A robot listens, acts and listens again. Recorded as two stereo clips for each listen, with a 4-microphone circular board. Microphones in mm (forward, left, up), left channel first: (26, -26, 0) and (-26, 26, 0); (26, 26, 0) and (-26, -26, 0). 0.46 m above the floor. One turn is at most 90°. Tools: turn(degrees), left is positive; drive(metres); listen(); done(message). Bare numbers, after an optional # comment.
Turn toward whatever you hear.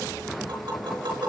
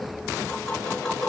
# The tapping: 125° left.
turn(90)
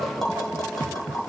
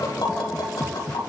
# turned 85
# The tapping is now 40° left.
turn(40)
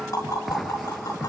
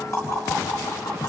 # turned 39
done("Facing the tapping.")